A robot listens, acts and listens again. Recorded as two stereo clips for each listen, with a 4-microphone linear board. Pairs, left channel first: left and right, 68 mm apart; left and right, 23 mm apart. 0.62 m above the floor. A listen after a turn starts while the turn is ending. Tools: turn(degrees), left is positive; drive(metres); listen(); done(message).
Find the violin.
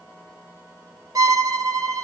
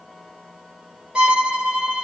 turn(degrees=-65)
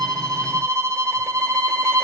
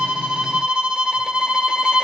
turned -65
turn(degrees=-50)
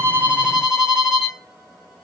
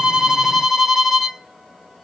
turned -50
turn(degrees=-10)
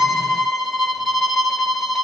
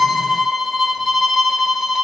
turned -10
done("Facing the violin.")